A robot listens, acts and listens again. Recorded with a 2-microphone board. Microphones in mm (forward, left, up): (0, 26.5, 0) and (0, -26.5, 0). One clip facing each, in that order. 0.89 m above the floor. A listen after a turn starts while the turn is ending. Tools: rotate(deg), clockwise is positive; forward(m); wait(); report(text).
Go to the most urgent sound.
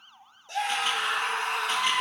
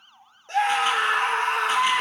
rotate(55)
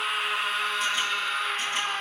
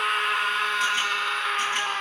rotate(70)
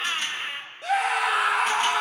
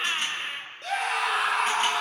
forward(1.0)
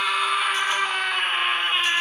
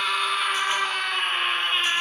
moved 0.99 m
rotate(-10)
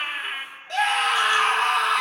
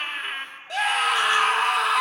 forward(1.0)
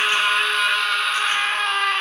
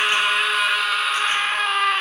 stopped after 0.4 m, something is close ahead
report("I am next to the scream.")